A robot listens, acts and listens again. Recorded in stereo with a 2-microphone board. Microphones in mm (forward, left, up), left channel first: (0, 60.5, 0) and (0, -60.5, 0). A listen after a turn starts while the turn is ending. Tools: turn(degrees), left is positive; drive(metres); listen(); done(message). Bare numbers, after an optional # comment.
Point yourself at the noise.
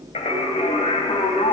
# The singing: about 70° left or 110° left.
turn(70)
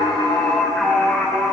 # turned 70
done("Found it: singing, straight ahead.")